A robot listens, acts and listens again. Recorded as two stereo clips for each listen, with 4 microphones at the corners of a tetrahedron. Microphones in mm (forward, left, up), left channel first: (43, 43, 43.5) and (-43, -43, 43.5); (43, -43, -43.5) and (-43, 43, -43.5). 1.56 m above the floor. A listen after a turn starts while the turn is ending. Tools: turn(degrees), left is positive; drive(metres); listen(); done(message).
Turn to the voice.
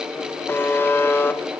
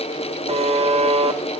listen()
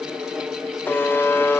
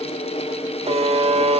listen()
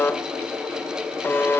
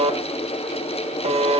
done("I can't make out anyone speaking, only a buzzer.")